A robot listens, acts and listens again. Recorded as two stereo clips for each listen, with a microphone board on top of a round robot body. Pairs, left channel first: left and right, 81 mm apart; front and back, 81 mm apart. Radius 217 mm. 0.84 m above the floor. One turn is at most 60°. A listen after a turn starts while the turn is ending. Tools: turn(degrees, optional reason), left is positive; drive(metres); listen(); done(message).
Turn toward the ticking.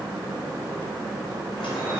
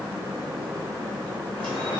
listen()
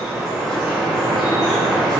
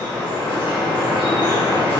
listen()
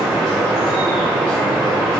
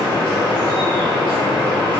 done("I can't make out ticking, only dripping.")